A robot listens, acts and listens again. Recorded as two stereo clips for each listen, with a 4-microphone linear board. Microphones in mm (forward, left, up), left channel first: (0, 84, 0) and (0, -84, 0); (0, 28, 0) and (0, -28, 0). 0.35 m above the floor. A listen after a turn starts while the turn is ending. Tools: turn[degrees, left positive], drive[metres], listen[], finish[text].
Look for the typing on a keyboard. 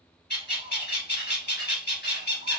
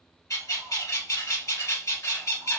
Action: listen[]
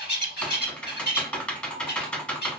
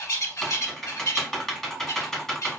Action: turn[30]
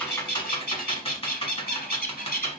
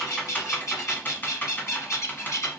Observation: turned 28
Thought: So it is at 145° left.
Action: turn[145]
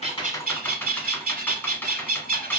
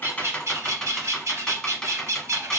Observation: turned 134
Thought: The typing on a keyboard is now 10° left.
Action: turn[10]
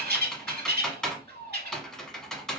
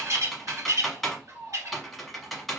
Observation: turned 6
Action: finish[Facing the typing on a keyboard.]